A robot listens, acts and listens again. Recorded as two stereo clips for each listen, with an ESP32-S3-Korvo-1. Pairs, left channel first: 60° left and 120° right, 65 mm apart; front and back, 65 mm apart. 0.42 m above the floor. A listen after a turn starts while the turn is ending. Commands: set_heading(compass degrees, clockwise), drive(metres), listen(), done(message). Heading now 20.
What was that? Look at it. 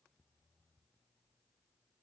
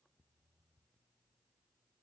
listen()
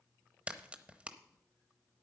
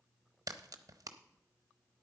set_heading(210)
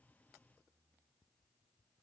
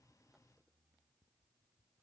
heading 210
done("I heard a crack from this way, but can't make it out now.")